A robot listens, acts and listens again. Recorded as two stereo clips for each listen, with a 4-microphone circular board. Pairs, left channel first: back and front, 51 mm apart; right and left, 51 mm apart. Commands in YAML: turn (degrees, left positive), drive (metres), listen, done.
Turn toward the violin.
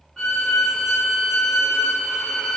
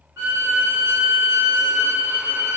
turn: 95
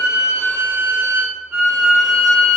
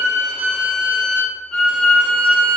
turn: -20
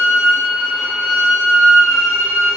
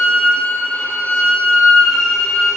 done: "Found it: a violin, straight ahead, under 1 m away."